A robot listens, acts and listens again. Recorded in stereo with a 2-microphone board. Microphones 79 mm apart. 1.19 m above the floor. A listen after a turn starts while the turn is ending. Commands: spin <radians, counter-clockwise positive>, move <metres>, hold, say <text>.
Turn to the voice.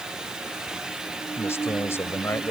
spin 0.61
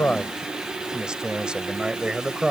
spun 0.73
spin -0.17
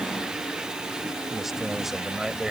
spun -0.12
say Facing the man speaking.